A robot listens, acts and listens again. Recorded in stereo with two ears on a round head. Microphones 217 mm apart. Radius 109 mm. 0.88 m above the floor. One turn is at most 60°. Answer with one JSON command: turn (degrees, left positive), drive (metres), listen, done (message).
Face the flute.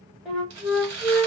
{"turn": 30}
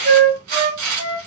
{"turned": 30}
{"turn": -30}
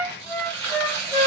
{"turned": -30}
{"done": "Facing the flute."}